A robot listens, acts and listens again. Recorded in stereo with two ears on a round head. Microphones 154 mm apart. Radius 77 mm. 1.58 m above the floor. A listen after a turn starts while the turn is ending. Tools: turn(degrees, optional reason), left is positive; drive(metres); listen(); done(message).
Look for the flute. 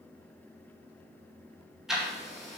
listen()
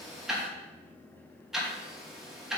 listen()
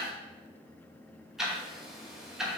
done("I can't make out a flute, only ticking.")